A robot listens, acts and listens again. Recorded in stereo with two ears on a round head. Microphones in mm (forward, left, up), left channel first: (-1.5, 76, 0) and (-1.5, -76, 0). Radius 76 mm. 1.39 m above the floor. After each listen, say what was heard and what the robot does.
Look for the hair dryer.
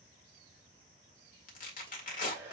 Turn 30° right.
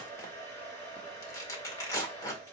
So it is at 20° left. Turn 20° left.
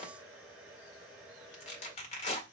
Facing the hair dryer.